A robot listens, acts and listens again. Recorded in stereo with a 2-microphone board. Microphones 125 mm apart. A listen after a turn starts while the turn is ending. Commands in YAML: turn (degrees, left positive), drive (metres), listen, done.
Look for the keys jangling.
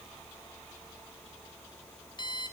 listen: true
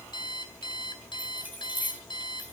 turn: -30
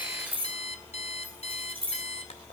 turn: -135
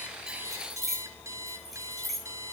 done: "Found it: keys jangling, straight ahead, over 4 m away."